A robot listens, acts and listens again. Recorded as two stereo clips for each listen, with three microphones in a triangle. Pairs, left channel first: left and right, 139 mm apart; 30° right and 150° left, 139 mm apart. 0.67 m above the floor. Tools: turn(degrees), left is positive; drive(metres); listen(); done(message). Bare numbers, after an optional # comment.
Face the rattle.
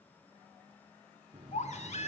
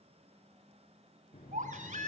listen()
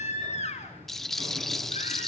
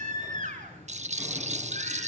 # The rattle: straight behind.
turn(180)
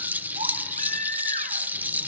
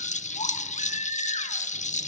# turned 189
# The rattle is now 10° right.
turn(-10)
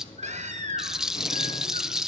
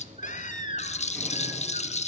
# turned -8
done("Found it: a rattle, straight ahead.")